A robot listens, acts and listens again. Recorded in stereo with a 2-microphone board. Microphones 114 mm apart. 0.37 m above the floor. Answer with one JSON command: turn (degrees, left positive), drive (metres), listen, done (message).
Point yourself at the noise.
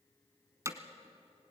{"turn": -25}
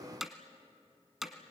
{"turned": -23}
{"done": "Found it: hammering, straight ahead."}